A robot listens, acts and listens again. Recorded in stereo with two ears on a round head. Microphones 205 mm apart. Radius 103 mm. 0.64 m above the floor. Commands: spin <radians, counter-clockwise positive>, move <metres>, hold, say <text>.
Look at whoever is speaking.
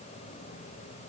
hold
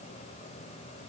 hold
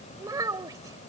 spin -0.26
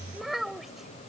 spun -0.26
say Facing the child speaking.